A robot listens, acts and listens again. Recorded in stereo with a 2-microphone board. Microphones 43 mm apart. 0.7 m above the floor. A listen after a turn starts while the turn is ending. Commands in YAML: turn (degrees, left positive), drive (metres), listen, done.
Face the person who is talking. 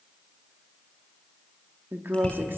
turn: -60
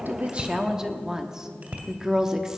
turn: -15
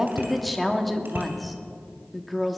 done: "Found it: a woman speaking, straight ahead, 1 to 2 m away."